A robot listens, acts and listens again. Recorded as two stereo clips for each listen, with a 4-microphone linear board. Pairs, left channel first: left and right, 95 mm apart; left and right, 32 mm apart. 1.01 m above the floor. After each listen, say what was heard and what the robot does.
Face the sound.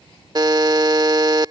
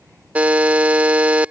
The buzzer: about 50° right or 130° right. Turn 50° right.
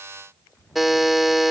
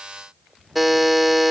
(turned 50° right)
Found it: a buzzer, straight ahead.